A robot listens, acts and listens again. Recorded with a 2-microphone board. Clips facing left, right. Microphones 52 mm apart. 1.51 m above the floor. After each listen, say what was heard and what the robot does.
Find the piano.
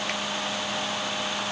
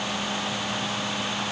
Keep listening.
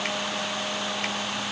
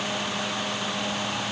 Keep listening.
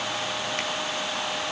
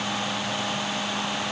I can't make out a piano to turn to.